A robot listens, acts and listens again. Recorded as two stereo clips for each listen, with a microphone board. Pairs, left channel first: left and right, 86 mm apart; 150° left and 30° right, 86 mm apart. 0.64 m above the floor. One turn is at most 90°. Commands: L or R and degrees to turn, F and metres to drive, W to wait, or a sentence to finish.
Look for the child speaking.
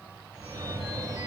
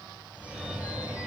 W
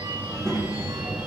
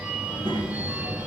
R45
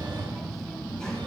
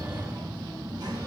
L10
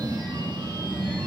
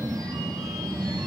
Found it: a child speaking, straight ahead.